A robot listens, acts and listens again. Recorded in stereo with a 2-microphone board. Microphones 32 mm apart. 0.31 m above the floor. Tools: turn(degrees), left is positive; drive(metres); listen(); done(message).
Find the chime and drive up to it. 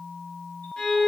listen()
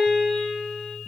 listen()
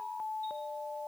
done("I can't make out a chime to turn to.")